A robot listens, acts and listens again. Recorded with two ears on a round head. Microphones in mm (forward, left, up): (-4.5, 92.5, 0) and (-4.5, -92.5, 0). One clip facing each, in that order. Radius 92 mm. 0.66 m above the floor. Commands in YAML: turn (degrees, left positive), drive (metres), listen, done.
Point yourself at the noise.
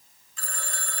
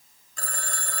turn: -45
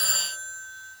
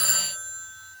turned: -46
turn: -90
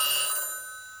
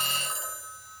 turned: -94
done: "Found it: a phone ringing, straight ahead, 2 to 4 m away."